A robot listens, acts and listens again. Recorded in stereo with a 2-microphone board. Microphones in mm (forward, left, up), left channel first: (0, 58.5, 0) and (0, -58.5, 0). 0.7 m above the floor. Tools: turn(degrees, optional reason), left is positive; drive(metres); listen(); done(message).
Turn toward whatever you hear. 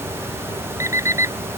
turn(degrees=-25, reason="The alarm clock: about 25° right or 155° right.")
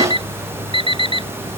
turn(degrees=-130, reason="So it is at 130° right.")
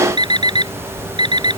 turn(degrees=-40, reason="The alarm clock is now 40° right.")
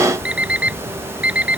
turn(degrees=-10, reason="The alarm clock is now 10° right.")
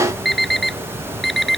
done("Facing the alarm clock.")